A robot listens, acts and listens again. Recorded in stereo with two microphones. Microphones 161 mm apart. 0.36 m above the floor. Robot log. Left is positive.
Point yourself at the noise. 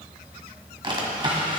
note: The drawer: about 30° right or 150° right.
cmd yaw -30
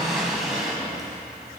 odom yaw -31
end: Found it: a drawer, straight ahead.